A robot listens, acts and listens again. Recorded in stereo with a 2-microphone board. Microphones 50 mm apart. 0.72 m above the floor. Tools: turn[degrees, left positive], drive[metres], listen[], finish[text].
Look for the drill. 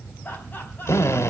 Action: turn[90]
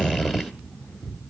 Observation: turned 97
Action: finish[Facing the drill.]